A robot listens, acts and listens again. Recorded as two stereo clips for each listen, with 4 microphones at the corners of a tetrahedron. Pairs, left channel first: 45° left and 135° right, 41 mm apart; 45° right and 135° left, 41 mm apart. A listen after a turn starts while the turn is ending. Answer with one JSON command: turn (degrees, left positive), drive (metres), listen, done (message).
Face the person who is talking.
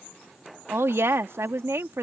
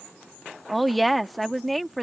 {"turn": -135}
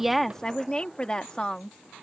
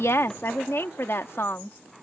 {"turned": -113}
{"turn": -25}
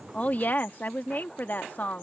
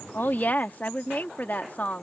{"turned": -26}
{"done": "Found it: a woman speaking, straight ahead."}